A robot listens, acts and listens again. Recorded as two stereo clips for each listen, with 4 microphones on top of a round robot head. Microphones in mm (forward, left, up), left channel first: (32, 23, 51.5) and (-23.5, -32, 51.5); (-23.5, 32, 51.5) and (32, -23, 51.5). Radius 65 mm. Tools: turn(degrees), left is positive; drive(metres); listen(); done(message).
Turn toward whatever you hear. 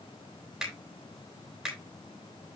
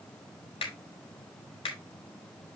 turn(degrees=140)
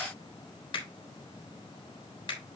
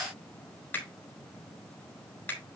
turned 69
turn(degrees=70)
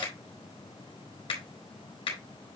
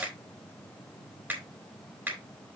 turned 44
turn(degrees=25)
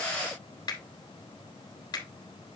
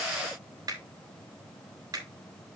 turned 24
done("Found it: a finger snap, straight ahead.")